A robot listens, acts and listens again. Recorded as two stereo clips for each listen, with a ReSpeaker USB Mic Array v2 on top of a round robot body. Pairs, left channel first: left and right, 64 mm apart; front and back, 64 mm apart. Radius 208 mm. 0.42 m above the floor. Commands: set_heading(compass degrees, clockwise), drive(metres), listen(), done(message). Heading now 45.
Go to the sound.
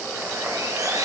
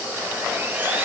set_heading(165)
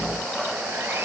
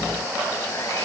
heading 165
listen()
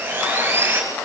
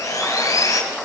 set_heading(195)
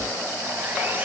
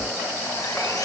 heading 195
set_heading(220)
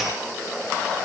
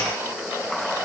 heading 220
listen()
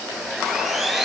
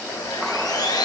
drive(1.0)
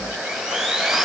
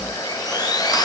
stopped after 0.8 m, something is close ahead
done("Blocked. The sawing is further on, straight ahead.")